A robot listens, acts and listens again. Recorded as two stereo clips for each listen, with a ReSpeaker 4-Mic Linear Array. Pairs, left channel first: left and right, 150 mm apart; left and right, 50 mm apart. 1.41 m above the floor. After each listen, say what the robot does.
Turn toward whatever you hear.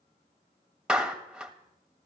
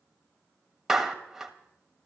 Turn 30° right.
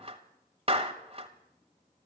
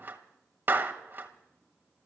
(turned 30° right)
Turn 145° right.
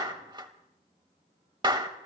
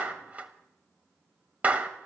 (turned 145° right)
Turn 30° right.
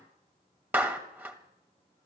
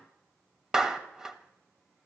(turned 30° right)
Turn 15° right.
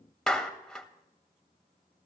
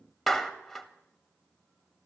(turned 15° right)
Facing the clap, 1 to 2 m away.